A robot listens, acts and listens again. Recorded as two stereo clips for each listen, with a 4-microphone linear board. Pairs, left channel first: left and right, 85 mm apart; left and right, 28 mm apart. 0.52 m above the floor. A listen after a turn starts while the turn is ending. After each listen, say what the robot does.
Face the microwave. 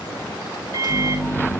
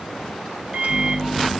Turn 60° right.
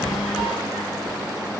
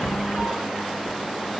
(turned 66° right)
Keep listening.
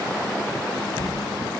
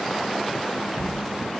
Keep listening.
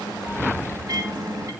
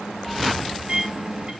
Turn 45° right.
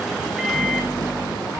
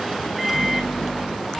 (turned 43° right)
Found it: a microwave, straight ahead, 2 to 4 m away.